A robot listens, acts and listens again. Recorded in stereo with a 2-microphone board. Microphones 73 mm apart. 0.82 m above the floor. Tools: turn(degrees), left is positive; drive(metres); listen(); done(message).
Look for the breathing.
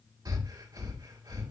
turn(degrees=-65)
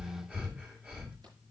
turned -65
turn(degrees=-15)
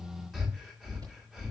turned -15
done("Found it: breathing, straight ahead.")